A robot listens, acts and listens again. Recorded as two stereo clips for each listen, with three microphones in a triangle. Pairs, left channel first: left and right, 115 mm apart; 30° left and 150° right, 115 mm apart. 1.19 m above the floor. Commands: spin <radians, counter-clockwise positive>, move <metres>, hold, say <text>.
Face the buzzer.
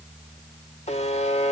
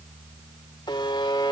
spin 1.40
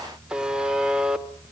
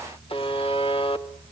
spin -0.17
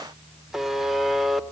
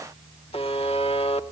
say Found it: a buzzer, straight ahead, 1 to 2 m away.